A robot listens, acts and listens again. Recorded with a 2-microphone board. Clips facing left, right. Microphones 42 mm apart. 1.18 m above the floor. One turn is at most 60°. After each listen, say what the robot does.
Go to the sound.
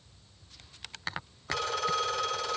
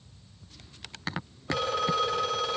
Turn 20° right.
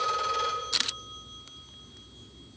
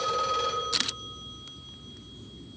Drive 1.0 m forward.
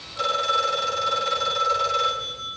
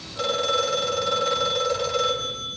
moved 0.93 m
Drive 1.0 m forward.
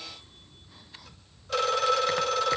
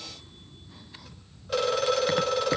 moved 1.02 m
Drive 1.0 m forward.
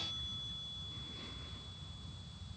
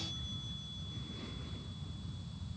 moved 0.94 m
Keep listening.
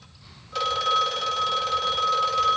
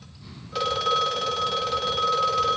Drive 1.0 m forward.
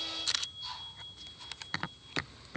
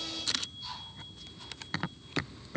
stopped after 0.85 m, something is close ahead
Keep listening.
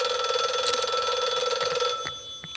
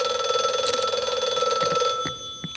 I am next to the phone ringing.